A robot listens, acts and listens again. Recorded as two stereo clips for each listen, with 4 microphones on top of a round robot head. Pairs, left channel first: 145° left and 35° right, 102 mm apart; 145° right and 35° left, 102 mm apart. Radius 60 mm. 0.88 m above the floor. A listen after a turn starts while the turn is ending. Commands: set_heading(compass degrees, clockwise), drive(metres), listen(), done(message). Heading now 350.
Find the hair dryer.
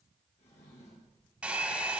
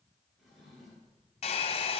set_heading(105)
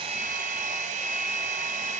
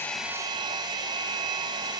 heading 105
set_heading(125)
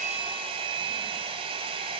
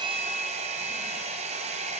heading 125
done("Facing the hair dryer.")